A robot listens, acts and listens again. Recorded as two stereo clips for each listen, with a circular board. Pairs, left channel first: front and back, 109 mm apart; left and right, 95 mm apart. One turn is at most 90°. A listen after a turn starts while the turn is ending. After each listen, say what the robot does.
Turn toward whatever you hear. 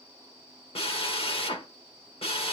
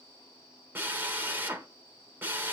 Turn 20° right.
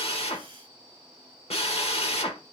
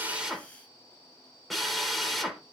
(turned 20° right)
Found it: a drill, straight ahead.